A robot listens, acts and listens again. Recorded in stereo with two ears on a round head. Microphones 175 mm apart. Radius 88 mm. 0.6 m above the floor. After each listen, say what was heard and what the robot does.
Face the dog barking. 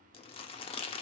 Keep listening.
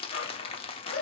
The dog barking: about 70° left or 110° left. Turn 70° left.
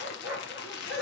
Facing the dog barking, 2 to 4 m away.